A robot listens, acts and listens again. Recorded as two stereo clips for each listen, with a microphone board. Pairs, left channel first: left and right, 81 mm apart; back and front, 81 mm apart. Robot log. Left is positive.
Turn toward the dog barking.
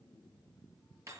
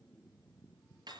cmd idle
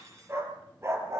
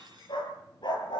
note: The dog barking: 145° right.
cmd yaw -145
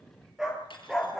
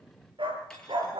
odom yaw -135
end: Found it: a dog barking, straight ahead.